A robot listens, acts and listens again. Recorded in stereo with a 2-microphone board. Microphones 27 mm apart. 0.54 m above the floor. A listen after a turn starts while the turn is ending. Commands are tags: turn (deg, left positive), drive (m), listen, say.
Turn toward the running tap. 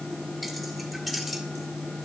<listen/>
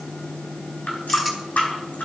<turn deg="90"/>
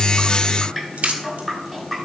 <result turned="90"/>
<turn deg="10"/>
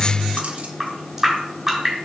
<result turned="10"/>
<say>Facing the running tap.</say>